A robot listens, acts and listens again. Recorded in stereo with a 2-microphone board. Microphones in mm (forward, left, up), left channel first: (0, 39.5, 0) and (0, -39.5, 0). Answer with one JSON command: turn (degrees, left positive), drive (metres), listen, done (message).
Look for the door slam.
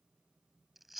{"listen": true}
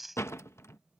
{"turn": 35}
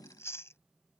{"listen": true}
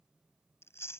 {"done": "I heard a door slam, but can't make it out now. It was about straight ahead or 110° left."}